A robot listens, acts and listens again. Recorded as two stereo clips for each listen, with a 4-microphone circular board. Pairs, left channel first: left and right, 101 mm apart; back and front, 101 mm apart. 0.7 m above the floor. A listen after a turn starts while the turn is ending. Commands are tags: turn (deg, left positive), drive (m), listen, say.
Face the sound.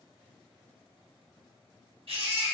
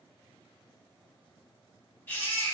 <turn deg="-110"/>
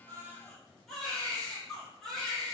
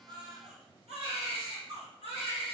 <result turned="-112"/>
<say>Facing the baby crying, 1 to 2 m away.</say>